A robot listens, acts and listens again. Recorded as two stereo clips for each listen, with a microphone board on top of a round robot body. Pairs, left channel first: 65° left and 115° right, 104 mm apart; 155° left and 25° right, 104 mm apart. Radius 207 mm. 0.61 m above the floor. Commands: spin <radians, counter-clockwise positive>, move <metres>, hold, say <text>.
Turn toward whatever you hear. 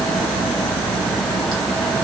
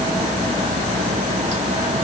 hold
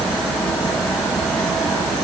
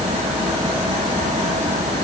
hold
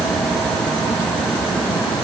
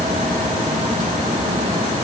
say I can't make out anything to turn to.